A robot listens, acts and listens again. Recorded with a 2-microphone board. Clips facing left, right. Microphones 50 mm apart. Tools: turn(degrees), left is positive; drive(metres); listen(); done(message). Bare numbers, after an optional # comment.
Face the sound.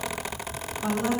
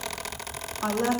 # The woman speaking: about 70° right or 110° right.
turn(-70)
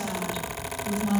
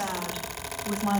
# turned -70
# So it is at 45° right.
turn(-45)
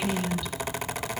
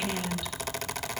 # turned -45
listen()
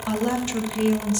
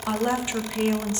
# The woman speaking is now 30° right.
turn(-30)
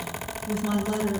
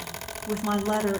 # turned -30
# The woman speaking is now 35° right.
turn(-35)
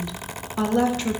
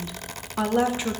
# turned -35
# The woman speaking is now 10° right.
turn(-10)
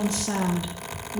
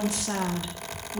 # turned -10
done("Found it: a woman speaking, straight ahead, 1 to 2 m away.")